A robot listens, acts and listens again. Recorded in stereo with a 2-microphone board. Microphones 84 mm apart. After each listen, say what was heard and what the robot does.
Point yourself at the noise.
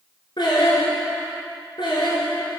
The singing: about 60° left or 120° left. Turn 60° left.
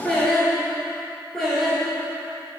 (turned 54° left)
So it is at 10° left. Turn 10° left.
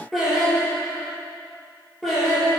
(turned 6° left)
Found it: singing, straight ahead, over 4 m away.